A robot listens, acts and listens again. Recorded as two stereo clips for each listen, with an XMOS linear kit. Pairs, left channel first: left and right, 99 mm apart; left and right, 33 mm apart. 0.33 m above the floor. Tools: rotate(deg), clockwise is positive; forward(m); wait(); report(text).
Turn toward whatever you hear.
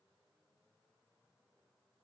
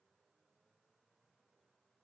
wait()
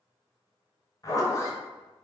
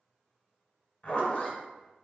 rotate(-35)
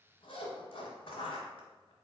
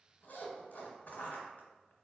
rotate(-105)
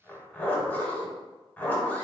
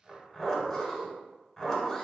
rotate(-15)
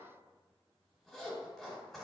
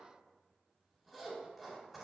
report("Facing the zipper, 1 to 2 m away.")